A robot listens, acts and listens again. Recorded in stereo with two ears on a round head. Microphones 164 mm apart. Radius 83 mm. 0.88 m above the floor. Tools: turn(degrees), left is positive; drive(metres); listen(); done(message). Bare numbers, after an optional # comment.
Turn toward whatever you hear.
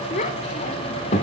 # The child speaking: about 40° left or 140° left.
turn(40)
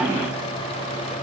listen()
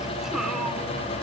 listen()
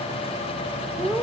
done("Facing the child speaking, 1 to 2 m away.")